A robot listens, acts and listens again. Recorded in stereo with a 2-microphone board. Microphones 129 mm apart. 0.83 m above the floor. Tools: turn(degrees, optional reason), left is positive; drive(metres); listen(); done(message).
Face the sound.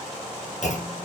turn(degrees=65, reason="The clunk: about 65° left or 115° left.")
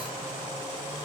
listen()
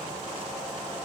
done("I heard a clunk, but can't make it out now. It was about straight ahead or 50° left.")